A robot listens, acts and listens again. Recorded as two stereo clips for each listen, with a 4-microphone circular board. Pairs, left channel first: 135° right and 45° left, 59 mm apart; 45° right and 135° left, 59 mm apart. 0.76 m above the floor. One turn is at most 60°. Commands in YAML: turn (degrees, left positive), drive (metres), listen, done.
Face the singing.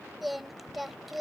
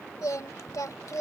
turn: -45
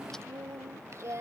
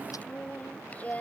turn: 15
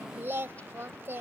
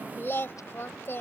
done: "Facing the singing."